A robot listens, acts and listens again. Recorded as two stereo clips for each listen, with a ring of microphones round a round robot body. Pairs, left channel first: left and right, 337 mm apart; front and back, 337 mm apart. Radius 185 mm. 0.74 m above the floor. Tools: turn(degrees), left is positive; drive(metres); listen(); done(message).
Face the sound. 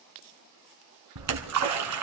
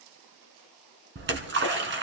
turn(degrees=-125)
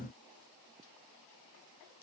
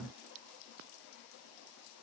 done("Facing where the splash came from. I can't hear it now.")